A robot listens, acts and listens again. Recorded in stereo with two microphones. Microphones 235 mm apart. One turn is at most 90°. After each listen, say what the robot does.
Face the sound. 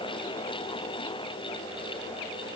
Keep listening.
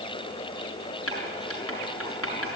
Turn 70° left.
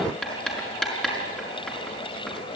Facing the writing.